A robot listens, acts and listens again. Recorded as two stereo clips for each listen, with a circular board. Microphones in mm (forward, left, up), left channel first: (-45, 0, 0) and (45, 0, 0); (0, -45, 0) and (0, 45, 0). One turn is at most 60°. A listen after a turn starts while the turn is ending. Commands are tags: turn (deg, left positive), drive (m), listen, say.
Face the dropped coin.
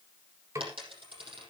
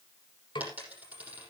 <turn deg="15"/>
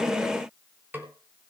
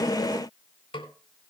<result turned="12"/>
<say>Facing where the dropped coin came from. I can't hear it now.</say>